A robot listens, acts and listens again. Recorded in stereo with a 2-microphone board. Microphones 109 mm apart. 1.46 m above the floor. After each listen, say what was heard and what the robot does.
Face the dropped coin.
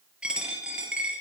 Turn 30° right.
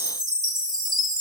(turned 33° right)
Keep listening.
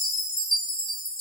I heard a dropped coin, but can't make it out now. It was about 25° left or 140° right.